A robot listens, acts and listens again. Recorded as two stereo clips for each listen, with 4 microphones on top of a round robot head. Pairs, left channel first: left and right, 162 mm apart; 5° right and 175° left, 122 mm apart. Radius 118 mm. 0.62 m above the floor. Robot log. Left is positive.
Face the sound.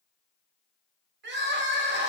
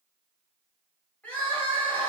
note: The crying: 85° right.
cmd yaw -85
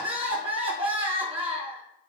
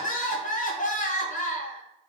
note: The crying is now 30° right.
cmd yaw -30
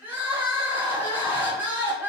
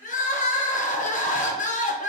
note: The crying is now 10° right.
cmd yaw -10
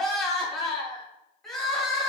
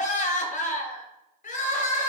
end: Found it: crying, straight ahead.